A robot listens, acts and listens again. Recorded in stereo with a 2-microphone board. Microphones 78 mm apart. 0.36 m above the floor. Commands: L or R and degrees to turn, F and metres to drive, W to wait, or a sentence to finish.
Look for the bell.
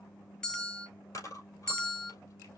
L30
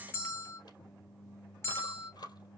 L140
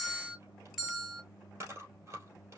R10
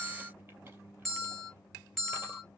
Facing the bell.